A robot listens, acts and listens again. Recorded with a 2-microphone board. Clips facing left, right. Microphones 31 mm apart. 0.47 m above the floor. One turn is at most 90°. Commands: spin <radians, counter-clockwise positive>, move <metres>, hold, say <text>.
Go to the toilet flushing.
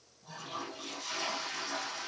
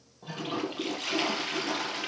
spin -1.31
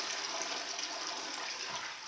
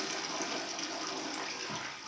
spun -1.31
move 1.0
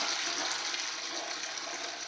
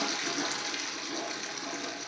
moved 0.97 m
move 1.0
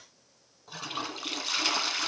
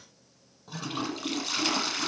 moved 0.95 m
move 1.0
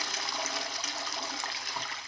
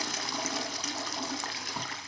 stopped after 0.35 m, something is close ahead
spin 0.17
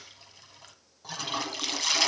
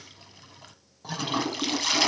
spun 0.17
say Arrived at the toilet flushing, straight ahead.